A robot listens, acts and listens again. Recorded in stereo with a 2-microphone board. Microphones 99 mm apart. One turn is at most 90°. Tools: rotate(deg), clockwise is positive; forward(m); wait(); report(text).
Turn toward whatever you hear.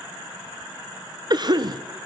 rotate(45)
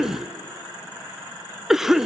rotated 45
report("Found it: a cough, straight ahead, under 1 m away.")